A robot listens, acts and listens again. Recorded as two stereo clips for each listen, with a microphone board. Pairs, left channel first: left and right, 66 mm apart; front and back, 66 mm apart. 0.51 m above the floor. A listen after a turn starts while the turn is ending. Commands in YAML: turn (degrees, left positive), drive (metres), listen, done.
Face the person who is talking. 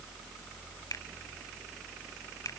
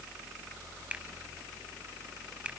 listen: true
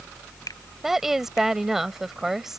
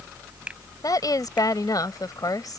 done: "Facing the woman speaking."